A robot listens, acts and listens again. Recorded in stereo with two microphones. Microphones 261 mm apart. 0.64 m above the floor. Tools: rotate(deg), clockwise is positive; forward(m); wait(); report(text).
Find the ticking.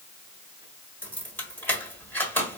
wait()
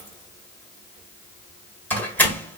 wait()
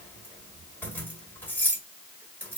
report("I can't make out ticking, only keys jangling.")